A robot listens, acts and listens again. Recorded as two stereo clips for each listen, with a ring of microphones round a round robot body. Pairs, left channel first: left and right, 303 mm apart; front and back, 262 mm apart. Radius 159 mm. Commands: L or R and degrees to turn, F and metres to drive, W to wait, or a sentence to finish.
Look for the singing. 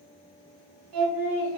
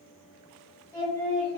R75
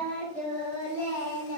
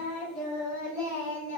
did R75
L15
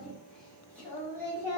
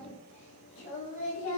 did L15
L10
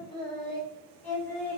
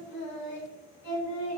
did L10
Facing the singing, 2 to 4 m away.